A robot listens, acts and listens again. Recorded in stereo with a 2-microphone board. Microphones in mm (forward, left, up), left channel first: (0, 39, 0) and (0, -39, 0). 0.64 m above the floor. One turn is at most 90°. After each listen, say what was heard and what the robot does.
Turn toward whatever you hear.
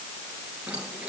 Turn 30° right.
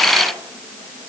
Keep listening.
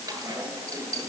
So it is at 140° right. Turn 90° right.
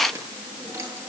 The keys jangling is now 40° right. Turn 40° right.
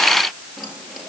Found it: keys jangling, straight ahead.